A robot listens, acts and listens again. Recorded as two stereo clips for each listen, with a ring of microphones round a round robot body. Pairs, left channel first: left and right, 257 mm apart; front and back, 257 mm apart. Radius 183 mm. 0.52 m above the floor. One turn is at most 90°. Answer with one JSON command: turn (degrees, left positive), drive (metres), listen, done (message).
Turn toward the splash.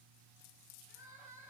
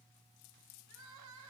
{"listen": true}
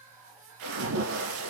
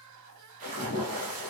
{"turn": -90}
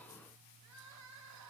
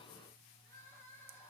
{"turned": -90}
{"turn": -20}
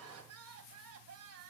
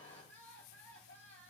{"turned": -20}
{"done": "I heard a splash from this way, but can't make it out now."}